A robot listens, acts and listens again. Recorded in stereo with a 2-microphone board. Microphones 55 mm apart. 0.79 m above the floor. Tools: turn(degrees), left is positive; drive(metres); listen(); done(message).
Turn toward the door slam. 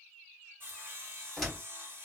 turn(degrees=30)
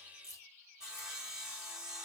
listen()
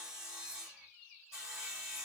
done("I heard a door slam, but can't make it out now. It was about 25° right or 145° left.")